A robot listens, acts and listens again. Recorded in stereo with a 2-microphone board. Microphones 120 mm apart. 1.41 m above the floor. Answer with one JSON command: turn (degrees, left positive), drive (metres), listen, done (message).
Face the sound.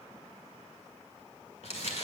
{"turn": 65}
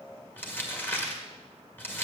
{"turn": 20}
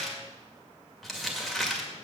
{"done": "Facing the crumpling, 2 to 4 m away."}